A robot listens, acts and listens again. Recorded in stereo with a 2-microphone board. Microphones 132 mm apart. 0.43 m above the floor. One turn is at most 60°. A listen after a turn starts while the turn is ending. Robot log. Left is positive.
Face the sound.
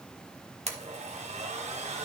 note: The blender: about 55° right or 125° right.
cmd yaw -55
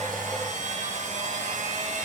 note: So it is at 65° right.
cmd yaw -60
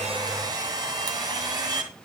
note: The blender is now 30° right.
cmd yaw -30
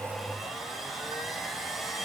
end: Found it: a blender, straight ahead.